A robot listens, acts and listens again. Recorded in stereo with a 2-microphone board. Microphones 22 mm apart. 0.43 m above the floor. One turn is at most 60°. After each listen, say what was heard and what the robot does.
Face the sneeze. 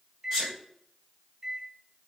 The sneeze: about 20° left or 160° left. Turn 20° left.
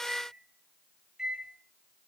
Keep listening.
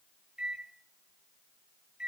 I heard a sneeze, but can't make it out now. It was about straight ahead or 140° left.